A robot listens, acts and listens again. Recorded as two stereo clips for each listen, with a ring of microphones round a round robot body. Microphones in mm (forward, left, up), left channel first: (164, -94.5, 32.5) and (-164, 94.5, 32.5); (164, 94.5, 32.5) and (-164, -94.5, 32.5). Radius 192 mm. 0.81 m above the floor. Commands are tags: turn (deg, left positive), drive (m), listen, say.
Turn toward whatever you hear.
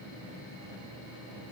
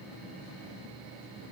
<listen/>
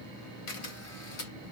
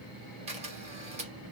<turn deg="-75"/>
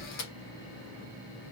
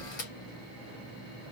<say>Facing the camera shutter.</say>